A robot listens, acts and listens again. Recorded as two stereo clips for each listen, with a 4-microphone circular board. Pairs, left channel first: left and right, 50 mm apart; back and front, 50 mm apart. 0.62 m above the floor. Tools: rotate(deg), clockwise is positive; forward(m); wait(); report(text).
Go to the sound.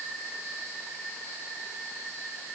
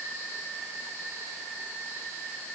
wait()
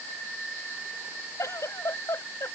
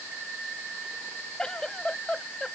rotate(-100)
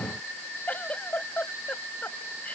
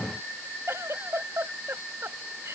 rotate(-30)
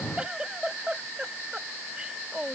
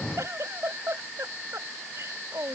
rotate(20)
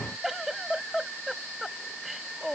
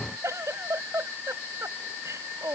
rotate(10)
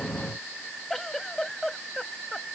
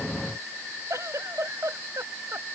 forward(1.0)
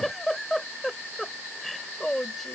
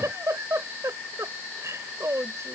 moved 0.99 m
forward(1.0)
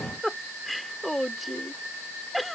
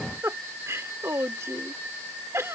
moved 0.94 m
forward(1.0)
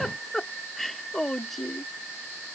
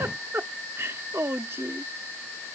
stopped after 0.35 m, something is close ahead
report("Arrived at the giggle, straight ahead.")